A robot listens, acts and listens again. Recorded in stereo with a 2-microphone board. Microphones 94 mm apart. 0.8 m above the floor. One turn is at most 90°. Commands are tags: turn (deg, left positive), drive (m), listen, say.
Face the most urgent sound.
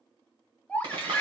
<turn deg="30"/>
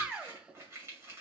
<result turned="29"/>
<turn deg="-15"/>
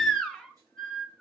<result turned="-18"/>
<say>Facing the baby crying, 1 to 2 m away.</say>